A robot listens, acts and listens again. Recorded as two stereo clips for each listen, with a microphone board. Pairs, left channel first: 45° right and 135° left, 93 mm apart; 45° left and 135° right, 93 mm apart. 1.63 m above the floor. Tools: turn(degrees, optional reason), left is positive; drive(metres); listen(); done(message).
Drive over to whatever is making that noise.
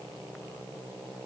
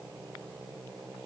listen()
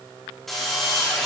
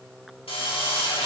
turn(degrees=45, reason="The drill: 45° left.")
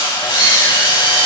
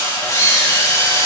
turn(degrees=-10, reason="The drill is now 10° right.")
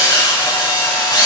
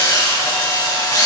drive(metres=1.0)
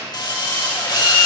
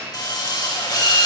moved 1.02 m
drive(metres=1.0)
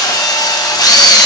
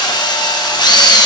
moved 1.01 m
drive(metres=1.0)
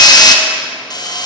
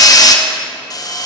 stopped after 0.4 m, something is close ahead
done("Arrived at the drill, straight ahead.")